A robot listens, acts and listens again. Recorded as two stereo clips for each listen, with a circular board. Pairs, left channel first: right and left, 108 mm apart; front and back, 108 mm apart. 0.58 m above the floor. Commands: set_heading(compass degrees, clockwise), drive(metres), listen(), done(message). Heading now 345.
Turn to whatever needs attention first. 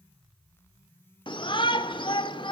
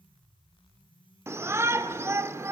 set_heading(105)
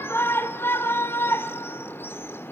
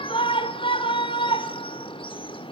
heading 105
set_heading(130)
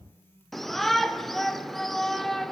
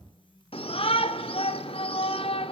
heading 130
done("Found it: a shout, straight ahead, 1 to 2 m away.")